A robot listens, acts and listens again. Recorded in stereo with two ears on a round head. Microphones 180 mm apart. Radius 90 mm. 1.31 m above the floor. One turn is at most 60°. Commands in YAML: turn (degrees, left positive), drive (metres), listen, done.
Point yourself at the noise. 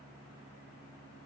listen: true
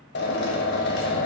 turn: 60
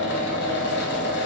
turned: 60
turn: 60
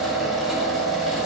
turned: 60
done: "Facing the drill, 1 to 2 m away."